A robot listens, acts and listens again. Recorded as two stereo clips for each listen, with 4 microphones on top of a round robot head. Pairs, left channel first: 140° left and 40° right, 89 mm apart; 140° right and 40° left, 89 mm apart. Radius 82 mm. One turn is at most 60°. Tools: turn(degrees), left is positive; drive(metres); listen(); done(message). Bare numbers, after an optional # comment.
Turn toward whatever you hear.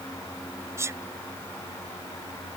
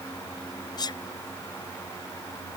# The sneeze: 100° right.
turn(-60)
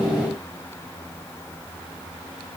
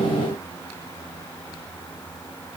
# Nothing new. It was at 40° right.
turn(-40)
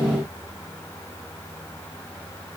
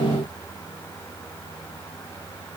done("Facing where the sneeze came from. I can't hear it now.")